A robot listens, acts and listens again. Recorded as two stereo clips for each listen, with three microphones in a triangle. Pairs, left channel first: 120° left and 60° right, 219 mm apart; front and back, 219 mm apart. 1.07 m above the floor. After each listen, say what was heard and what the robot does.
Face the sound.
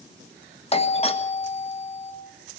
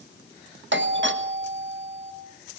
The doorbell: 175° left. Turn 175° left.
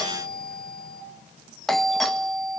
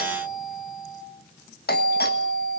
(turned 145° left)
The doorbell is now 30° left. Turn 30° left.
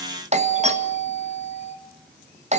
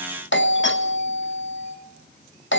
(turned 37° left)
Found it: a doorbell, straight ahead, 1 to 2 m away.